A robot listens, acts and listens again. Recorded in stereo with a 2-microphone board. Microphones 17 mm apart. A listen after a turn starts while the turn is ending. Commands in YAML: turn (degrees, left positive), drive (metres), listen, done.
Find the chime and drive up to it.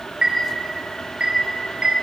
turn: -45
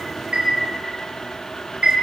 turn: -85
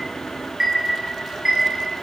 turn: -25
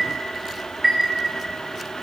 turn: -10
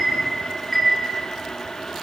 drive: 1.0
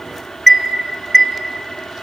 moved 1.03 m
drive: 1.0
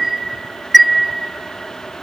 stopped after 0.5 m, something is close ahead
done: "Arrived at the chime, straight ahead."